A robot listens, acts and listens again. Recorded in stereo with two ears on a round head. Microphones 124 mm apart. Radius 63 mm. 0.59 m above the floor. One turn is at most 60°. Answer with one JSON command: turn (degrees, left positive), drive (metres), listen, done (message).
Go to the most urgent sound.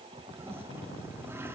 {"listen": true}
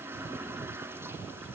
{"listen": true}
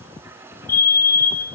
{"turn": 20}
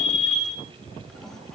{"drive": 1.0}
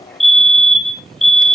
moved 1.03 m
{"drive": 1.0}
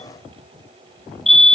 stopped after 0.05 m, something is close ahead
{"done": "I am next to the fire alarm."}